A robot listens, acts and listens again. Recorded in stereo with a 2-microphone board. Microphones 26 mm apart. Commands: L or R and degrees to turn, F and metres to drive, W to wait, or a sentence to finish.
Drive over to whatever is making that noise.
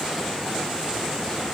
W
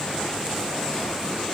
W
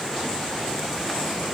I can't make out anything to turn to.